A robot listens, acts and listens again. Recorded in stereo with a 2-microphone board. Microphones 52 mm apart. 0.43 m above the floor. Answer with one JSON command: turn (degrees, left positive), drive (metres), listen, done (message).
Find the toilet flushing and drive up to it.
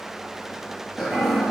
{"turn": -30}
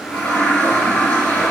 {"turn": 25}
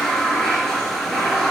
{"turn": 10}
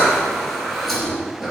{"drive": 1.0}
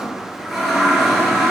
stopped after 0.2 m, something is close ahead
{"done": "Blocked. The toilet flushing is further on, straight ahead."}